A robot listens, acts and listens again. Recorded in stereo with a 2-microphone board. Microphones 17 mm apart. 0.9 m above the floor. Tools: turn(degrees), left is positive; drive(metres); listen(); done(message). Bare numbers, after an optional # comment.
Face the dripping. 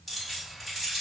listen()
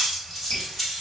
# The dripping: about 55° left or 125° left.
turn(55)
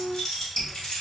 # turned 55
# So it is at 35° left.
turn(35)
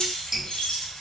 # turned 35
# The dripping is now 25° right.
turn(-25)
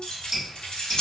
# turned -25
# The dripping is now 15° right.
turn(-15)
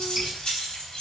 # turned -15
listen()
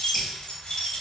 listen()
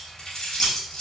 done("Facing where the dripping came from. I can't hear it now.")